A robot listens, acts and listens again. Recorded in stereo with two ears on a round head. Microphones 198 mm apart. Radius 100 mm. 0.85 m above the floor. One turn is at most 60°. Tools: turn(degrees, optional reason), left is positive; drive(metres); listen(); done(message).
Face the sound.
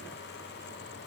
listen()
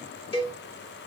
turn(degrees=25, reason="The cowbell: about 25° left or 155° left.")
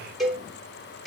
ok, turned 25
done("Found it: a cowbell, straight ahead, 1 to 2 m away.")